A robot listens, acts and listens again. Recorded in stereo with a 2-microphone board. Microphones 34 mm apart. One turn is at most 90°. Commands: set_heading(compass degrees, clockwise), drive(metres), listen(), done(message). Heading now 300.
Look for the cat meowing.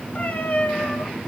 set_heading(250)
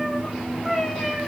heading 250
set_heading(240)
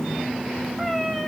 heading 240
set_heading(230)
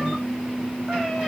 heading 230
listen()
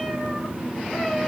listen()
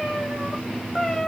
set_heading(220)
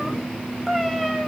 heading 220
done("Found it: a cat meowing, straight ahead, over 4 m away.")